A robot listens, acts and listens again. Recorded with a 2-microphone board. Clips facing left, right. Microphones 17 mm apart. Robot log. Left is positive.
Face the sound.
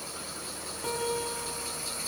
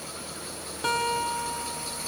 note: The guitar: about 40° right or 140° right.
cmd yaw -40
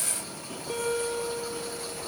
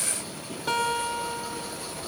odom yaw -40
note: So it is at 100° right.
cmd yaw -100
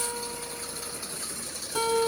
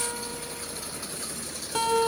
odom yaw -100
note: The guitar is now 20° right.
cmd yaw -20
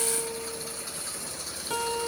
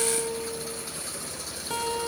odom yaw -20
end: Found it: a guitar, straight ahead, 2 to 4 m away.